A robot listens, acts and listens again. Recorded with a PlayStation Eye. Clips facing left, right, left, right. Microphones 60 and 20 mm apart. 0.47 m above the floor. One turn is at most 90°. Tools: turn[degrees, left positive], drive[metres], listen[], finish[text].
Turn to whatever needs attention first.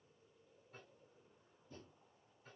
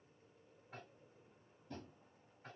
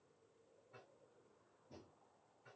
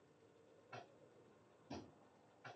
Action: listen[]
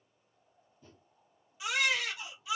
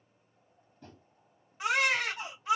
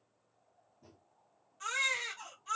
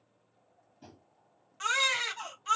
Thought: The baby crying: about 50° right or 130° right.
Action: turn[-50]
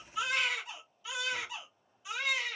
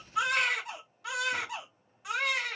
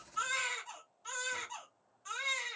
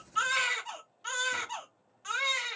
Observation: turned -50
Thought: So it is at 75° right.
Action: turn[-75]
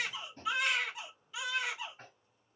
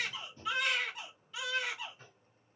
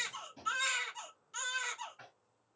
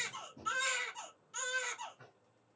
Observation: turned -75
Action: finish[Facing the baby crying.]